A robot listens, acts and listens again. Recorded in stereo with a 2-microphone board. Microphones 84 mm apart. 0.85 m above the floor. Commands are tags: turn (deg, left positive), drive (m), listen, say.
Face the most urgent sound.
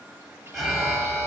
<turn deg="30"/>
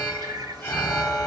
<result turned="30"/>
<turn deg="150"/>
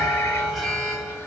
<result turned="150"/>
<say>Facing the alarm.</say>